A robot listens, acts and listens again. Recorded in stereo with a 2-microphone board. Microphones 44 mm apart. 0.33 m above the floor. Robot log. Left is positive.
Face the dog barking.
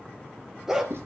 cmd yaw -30
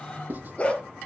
note: So it is at 30° left.
cmd yaw +30
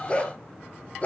note: The dog barking is now 30° left.
cmd yaw +30
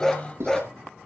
note: The dog barking is now 15° left.
cmd yaw +15
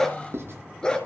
note: The dog barking is now 20° left.
cmd yaw +20
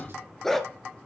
note: The dog barking is now 10° left.
cmd yaw +10
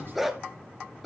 end: Facing the dog barking.